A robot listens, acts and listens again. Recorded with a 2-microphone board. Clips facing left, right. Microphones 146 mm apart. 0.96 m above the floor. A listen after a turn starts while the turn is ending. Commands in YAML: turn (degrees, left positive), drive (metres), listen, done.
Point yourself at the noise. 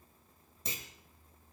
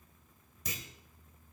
turn: 30
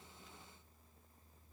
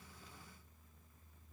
listen: true
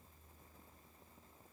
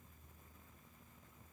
done: "I heard a clunk, but can't make it out now. It was about straight ahead or 120° left."